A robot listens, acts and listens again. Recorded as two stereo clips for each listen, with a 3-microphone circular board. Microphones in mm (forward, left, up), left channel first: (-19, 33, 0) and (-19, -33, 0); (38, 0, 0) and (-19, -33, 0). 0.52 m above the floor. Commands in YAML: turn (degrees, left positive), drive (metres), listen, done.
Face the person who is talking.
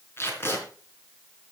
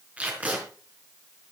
listen: true
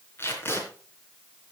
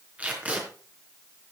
listen: true
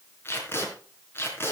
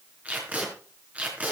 done: "I can't make out anyone speaking to turn to."